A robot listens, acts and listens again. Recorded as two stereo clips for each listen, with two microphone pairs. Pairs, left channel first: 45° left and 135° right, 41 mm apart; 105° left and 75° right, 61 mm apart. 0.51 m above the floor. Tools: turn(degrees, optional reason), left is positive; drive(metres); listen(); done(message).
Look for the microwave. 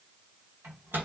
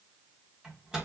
turn(degrees=-150, reason="The microwave: 150° right.")
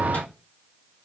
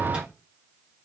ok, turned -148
listen()
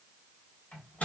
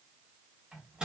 done("Facing the microwave, 2 to 4 m away.")